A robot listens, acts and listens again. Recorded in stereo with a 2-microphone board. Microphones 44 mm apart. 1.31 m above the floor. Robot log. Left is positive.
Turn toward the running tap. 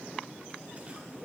cmd idle
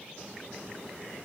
cmd idle
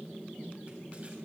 end: I can't make out a running tap to turn to.